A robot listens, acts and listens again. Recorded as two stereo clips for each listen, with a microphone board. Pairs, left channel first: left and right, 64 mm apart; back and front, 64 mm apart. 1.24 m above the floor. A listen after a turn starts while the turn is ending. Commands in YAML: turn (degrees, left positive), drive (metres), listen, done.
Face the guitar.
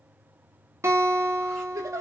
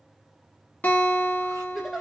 turn: -120
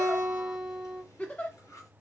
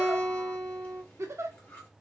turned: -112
turn: -10
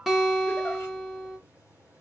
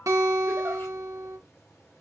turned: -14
done: "Found it: a guitar, straight ahead, 1 to 2 m away."